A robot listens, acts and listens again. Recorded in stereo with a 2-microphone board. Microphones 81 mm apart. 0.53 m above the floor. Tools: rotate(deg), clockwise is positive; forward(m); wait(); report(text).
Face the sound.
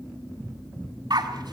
rotate(60)
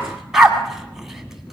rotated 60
report("Found it: a dog barking, straight ahead.")